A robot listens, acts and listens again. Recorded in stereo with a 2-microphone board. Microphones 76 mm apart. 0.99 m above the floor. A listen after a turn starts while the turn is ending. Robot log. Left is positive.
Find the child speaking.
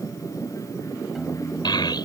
note: The child speaking: about 70° left or 110° left.
cmd yaw +70
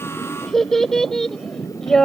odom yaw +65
end: Facing the child speaking.